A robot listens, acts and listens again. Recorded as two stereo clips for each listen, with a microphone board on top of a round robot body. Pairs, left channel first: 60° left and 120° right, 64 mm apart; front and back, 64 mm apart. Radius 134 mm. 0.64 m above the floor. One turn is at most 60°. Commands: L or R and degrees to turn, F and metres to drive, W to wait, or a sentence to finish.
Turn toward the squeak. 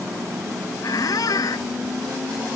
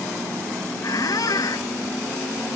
L30
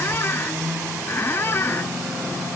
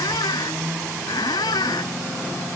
Facing the squeak.